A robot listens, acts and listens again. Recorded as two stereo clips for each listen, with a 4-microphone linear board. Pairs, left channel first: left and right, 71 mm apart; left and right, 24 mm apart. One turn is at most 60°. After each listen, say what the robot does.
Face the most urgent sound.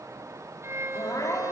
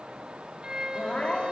Turn 60° left.
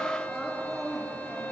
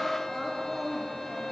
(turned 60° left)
Facing the crying.